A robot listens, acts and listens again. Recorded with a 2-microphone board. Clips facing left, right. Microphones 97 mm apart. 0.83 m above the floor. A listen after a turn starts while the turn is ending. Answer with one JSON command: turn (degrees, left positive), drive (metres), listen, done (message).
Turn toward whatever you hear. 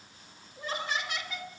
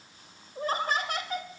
{"turn": -45}
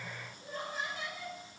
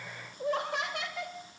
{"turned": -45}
{"turn": -75}
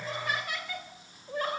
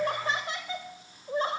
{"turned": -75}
{"turn": -25}
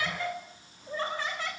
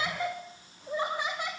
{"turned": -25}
{"turn": -15}
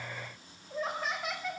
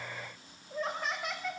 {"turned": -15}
{"done": "Facing the laughter."}